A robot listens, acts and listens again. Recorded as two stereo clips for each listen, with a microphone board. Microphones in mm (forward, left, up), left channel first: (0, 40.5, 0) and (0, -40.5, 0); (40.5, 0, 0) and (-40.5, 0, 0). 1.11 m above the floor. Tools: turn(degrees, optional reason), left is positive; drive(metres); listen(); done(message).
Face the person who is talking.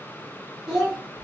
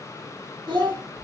turn(degrees=-170, reason="The child speaking: 170° right.")
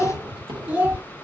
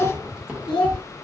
turn(degrees=-20, reason="The child speaking is now 20° right.")
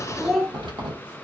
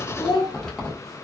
done("Found it: a child speaking, straight ahead.")